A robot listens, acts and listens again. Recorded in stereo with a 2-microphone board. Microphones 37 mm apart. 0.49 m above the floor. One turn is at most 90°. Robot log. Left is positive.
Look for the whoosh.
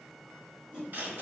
note: The whoosh: about 35° right or 145° right.
cmd yaw -35
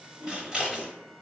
note: So it is at 100° right.
cmd yaw -90
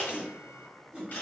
note: The whoosh is now 30° right.
cmd yaw -30
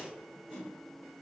note: The whoosh is now 15° right.
cmd yaw -15
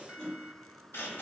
end: Found it: a whoosh, straight ahead.